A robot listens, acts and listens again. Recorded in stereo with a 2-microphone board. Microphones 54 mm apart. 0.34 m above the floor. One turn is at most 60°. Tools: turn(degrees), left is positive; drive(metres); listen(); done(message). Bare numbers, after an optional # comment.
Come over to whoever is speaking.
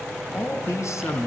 # The man speaking: about 65° left or 115° left.
turn(60)
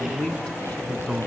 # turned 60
# So it is at 15° left.
turn(15)
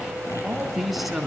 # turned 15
drive(1.0)
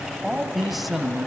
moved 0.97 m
drive(1.0)
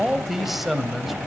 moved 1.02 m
drive(1.0)
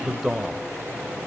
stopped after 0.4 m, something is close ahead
done("Arrived at the man speaking, straight ahead.")